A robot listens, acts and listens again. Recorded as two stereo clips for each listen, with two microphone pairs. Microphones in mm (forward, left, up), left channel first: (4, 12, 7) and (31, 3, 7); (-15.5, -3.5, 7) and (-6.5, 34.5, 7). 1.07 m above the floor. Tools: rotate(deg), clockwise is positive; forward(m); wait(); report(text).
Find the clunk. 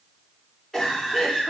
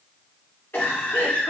wait()
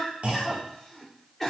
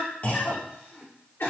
rotate(55)
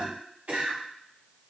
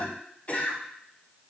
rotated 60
report("Facing where the clunk came from. I can't hear it now.")